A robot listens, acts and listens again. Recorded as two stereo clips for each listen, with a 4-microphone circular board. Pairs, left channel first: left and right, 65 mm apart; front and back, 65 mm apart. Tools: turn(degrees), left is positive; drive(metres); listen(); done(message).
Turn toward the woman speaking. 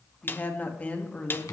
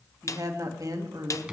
turn(degrees=165)
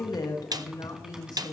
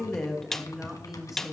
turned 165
turn(degrees=100)
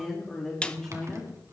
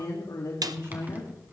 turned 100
turn(degrees=10)
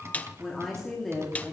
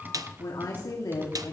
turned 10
done("Found it: a woman speaking, straight ahead, 2 to 4 m away.")